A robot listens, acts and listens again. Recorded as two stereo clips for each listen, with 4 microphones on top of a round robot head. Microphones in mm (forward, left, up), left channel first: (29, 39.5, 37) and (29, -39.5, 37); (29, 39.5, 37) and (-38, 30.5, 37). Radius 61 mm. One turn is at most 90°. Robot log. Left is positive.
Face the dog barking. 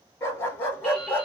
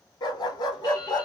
note: The dog barking: 25° left.
cmd yaw +25
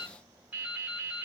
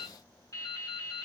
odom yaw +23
cmd idle
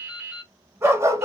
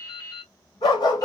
note: The dog barking is now 35° right.
cmd yaw -35
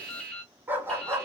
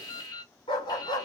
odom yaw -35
note: The dog barking is now 35° right.
cmd yaw -35
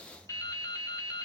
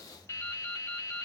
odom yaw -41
note: Nothing new. It was at 10° left.
cmd yaw +10
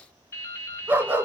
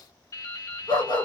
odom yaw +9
note: The dog barking is now 25° right.
cmd yaw -25
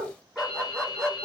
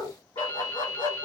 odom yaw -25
end: Facing the dog barking.